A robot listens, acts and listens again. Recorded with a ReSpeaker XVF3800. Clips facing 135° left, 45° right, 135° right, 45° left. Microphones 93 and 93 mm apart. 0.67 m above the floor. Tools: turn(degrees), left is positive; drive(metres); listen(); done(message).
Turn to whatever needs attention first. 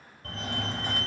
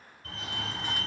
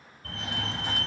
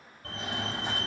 turn(degrees=105)
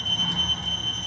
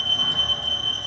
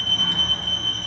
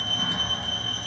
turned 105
turn(degrees=-25)
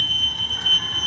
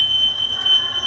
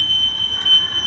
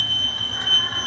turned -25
turn(degrees=-20)
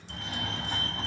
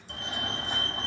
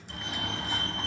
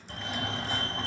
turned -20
done("Facing the fire alarm, 2 to 4 m away.")